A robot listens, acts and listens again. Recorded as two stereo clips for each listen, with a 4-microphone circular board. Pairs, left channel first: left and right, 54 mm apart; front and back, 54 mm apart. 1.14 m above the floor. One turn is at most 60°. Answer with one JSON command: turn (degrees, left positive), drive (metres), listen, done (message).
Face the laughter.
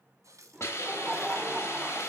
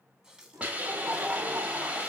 {"turn": -60}
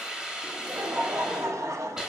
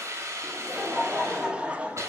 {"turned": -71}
{"turn": -60}
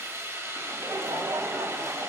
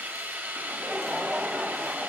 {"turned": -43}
{"turn": -60}
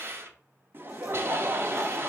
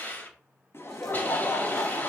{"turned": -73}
{"turn": -40}
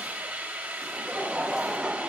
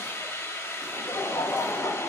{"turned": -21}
{"turn": -20}
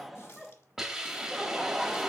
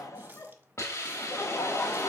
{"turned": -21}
{"done": "Found it: laughter, straight ahead, 1 to 2 m away."}